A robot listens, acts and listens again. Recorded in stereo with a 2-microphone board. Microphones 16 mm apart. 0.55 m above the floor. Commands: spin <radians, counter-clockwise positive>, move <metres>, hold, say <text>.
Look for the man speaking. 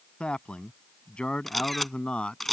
spin 1.22
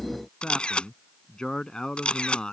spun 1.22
spin 0.96
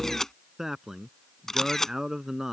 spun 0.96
spin -0.35
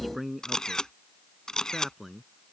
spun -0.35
say Found it: a man speaking, straight ahead.